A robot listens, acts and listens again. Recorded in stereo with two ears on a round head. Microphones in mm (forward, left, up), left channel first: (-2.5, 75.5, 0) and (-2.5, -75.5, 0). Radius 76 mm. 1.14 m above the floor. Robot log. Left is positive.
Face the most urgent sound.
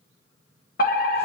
note: The fire alarm: about 55° left or 125° left.
cmd yaw +55
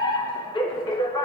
note: So it is at 30° left.
cmd yaw +30
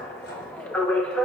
note: The fire alarm is now 10° left.
cmd yaw +10
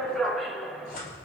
end: Facing the fire alarm.